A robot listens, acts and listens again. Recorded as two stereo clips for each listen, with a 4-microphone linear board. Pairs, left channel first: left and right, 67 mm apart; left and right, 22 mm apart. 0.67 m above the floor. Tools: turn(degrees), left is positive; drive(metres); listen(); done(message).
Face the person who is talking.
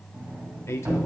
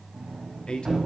turn(degrees=45)
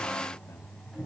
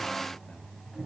listen()
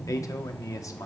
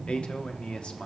turn(degrees=80)
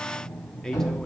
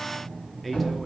turn(degrees=10)
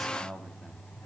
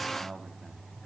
done("Found it: a man speaking, straight ahead, under 1 m away.")